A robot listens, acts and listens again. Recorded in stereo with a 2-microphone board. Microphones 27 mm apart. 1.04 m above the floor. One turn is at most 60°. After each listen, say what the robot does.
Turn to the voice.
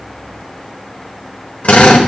Keep listening.
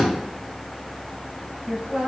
Turn 25° right.
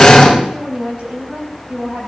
Turn 60° right.
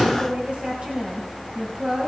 Turn 55° right.
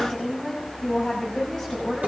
Turn 10° left.
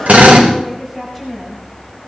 Found it: a woman speaking, straight ahead, over 4 m away.